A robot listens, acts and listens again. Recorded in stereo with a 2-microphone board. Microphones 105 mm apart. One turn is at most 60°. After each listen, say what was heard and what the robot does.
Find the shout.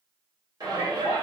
The shout: about 40° right or 140° right. Turn 40° right.
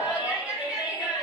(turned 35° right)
So it is at 10° right. Turn 10° right.
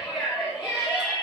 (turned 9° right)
Found it: a shout, straight ahead, 1 to 2 m away.